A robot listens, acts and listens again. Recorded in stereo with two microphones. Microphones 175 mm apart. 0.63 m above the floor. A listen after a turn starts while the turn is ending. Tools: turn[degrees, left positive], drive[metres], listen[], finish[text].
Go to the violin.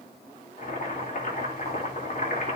Action: listen[]
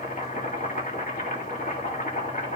Action: listen[]
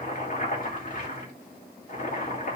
Action: finish[I can't make out a violin to turn to.]